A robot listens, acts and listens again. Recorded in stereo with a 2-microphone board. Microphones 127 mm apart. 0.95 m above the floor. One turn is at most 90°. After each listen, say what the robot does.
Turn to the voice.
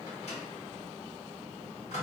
Keep listening.
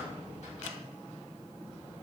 Keep listening.
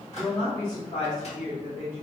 Turn 90° left.
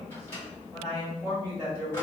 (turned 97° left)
Turn 20° right.
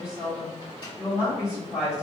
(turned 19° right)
Facing the woman speaking.